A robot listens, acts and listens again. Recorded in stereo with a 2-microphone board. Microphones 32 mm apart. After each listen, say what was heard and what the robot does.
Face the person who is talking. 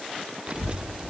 The child speaking: about 30° right or 150° right. Turn 30° right.
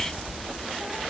Facing the child speaking, 1 to 2 m away.